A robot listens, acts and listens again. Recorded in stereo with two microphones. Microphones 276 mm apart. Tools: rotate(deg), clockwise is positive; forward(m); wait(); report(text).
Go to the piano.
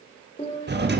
rotate(-20)
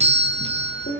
rotate(-140)
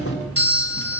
wait()
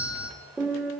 forward(1.0)
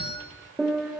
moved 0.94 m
forward(1.0)
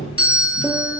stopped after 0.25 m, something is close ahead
wait()
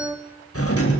report("Arrived at the piano, straight ahead.")